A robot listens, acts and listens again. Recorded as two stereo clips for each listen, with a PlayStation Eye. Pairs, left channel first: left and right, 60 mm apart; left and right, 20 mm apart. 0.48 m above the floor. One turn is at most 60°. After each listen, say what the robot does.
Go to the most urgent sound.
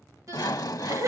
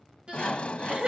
Turn 55° right.
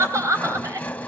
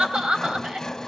Turn 60° right.
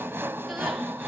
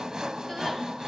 Keep listening.
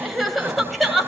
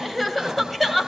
Drive 1.0 m forward.
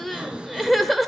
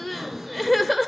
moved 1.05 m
Drive 1.0 m forward.
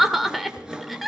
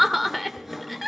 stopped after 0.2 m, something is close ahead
Arrived at the crying, straight ahead.